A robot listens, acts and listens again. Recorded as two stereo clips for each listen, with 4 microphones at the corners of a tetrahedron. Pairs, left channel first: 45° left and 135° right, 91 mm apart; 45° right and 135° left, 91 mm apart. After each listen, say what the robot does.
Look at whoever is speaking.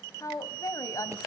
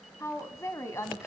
Found it: a woman speaking, straight ahead.